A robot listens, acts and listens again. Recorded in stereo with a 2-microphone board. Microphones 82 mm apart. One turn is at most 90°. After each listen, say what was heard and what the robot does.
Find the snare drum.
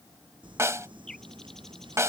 The snare drum: about 35° right or 145° right. Turn 35° right.
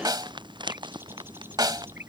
So it is at 105° right. Turn 90° right.
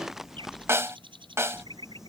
The snare drum is now 40° right. Turn 40° right.
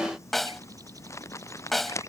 Facing the snare drum.